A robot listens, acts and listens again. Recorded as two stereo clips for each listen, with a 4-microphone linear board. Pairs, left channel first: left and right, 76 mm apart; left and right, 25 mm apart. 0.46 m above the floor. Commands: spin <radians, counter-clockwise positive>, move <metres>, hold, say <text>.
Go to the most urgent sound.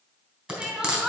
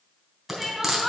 spin -0.52
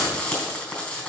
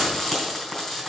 hold
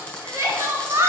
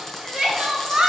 spin -2.53
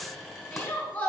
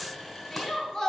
spin 0.35
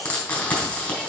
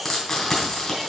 hold
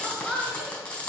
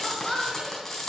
move 1.0
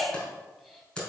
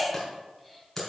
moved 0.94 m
move 1.0
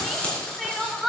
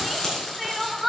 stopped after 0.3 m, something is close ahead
say I am next to the crying.